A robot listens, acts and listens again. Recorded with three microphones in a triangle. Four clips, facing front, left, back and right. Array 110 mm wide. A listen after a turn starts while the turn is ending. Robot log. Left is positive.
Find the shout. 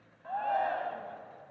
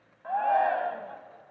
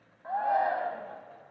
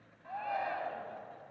note: The shout: 105° left.
cmd yaw +105
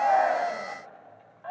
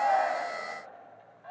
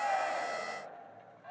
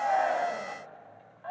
note: The shout is now 30° right.
cmd yaw -30
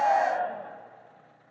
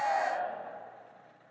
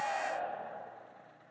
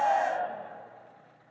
end: Found it: a shout, straight ahead, 1 to 2 m away.